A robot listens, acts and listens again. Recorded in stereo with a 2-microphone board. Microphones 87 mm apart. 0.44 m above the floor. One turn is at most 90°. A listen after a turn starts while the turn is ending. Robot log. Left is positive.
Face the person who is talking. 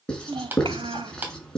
cmd yaw -90
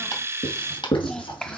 end: Found it: a child speaking, straight ahead, 1 to 2 m away.